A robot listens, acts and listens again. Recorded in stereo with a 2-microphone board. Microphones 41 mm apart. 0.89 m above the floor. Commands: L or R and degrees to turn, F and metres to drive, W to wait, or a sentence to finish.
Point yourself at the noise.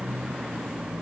W
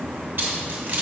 R50
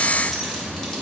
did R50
Found it: keys jangling, straight ahead, 2 to 4 m away.